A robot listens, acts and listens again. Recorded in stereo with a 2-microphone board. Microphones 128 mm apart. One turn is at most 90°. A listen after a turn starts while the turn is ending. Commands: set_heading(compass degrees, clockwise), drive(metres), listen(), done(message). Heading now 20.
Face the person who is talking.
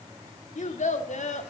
set_heading(310)
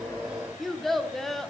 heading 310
done("Facing the child speaking.")